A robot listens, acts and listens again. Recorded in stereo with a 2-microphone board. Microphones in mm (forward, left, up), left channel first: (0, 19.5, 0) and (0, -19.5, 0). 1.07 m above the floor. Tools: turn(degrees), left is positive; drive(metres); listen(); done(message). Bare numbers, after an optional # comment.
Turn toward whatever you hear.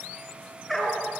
turn(30)
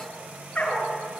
# So it is at 155° left.
turn(155)
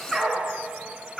done("Found it: a dog barking, straight ahead.")